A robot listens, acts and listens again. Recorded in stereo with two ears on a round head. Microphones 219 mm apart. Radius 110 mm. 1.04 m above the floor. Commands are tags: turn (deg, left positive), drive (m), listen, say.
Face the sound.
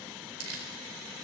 <turn deg="-65"/>
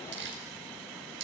<turn deg="-50"/>
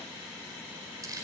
<turn deg="-15"/>
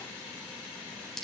<say>Facing the crumpling, over 4 m away.</say>